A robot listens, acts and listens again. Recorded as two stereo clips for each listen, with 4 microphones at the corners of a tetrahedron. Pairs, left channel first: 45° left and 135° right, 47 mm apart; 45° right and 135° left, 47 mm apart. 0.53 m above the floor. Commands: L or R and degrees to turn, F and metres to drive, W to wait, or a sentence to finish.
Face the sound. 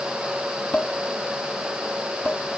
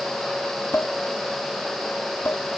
Facing the dishes clattering.